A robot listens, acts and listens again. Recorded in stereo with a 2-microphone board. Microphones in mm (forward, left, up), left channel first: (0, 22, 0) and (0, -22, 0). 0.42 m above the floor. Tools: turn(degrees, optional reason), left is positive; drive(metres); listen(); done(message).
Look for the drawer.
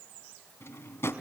turn(degrees=90)
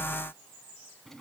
listen()
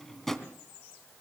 done("Facing the drawer, 2 to 4 m away.")